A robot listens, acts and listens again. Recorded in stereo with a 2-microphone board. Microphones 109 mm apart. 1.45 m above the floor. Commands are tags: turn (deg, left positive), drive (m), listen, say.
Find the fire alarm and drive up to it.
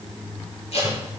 <listen/>
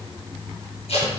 <listen/>
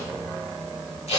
<say>I can't make out a fire alarm to turn to.</say>